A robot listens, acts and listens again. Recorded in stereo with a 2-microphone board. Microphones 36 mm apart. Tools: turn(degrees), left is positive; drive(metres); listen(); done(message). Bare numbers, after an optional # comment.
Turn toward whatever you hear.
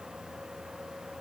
listen()
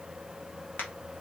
# The crack: about 65° left or 115° left.
turn(65)
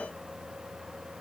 listen()
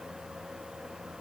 done("I heard a crack, but can't make it out now. It was about straight ahead or 50° left.")